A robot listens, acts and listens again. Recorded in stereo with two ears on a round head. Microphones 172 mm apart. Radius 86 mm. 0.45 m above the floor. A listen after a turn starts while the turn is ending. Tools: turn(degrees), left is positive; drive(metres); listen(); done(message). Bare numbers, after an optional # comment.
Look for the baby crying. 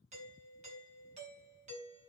listen()
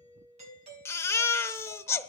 turn(30)
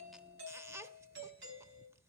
# So it is at 15° right.
turn(-15)
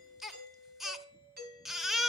done("Facing the baby crying.")